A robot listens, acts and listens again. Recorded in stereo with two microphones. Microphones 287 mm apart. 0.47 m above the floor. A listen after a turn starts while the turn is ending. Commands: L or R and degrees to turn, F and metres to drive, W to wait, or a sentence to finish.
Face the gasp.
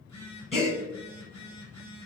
L20
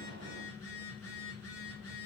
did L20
W
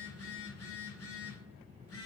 I heard a gasp, but can't make it out now. It was about straight ahead or 140° left.